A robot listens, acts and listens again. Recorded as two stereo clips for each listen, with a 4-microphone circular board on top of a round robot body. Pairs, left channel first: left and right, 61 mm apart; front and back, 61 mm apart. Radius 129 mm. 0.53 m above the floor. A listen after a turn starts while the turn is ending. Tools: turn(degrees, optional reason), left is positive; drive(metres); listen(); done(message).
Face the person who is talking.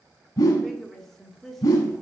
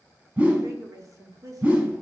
turn(degrees=180, reason="The woman speaking: straight behind.")
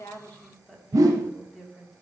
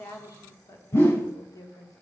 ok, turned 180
turn(degrees=10, reason="The woman speaking is now 10° left.")
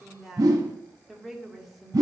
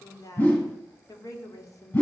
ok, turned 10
done("Facing the woman speaking, 1 to 2 m away.")